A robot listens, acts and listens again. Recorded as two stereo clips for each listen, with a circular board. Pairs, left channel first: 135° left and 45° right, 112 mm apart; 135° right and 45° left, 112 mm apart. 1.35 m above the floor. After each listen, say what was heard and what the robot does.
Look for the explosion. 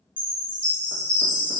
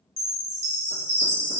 Keep listening.
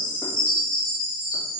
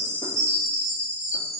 Keep listening.
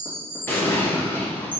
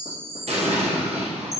The explosion: 65° left. Turn 65° left.
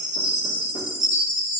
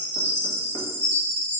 I heard an explosion from this way, but can't make it out now.